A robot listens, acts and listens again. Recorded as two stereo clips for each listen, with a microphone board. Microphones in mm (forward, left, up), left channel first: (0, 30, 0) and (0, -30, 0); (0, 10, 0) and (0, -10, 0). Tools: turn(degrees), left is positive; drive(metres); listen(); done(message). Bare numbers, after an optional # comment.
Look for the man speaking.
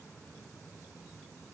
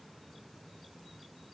listen()
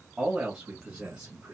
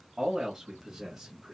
# The man speaking: about 25° right or 155° right.
turn(-25)
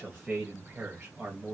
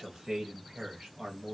# The man speaking: about 30° right or 150° right.
turn(-30)
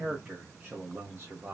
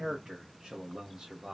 # The man speaking: about 35° right or 145° right.
turn(-35)
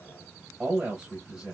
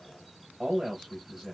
# The man speaking: about 20° right or 160° right.
turn(-20)
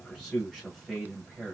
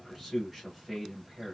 done("Facing the man speaking, 1 to 2 m away.")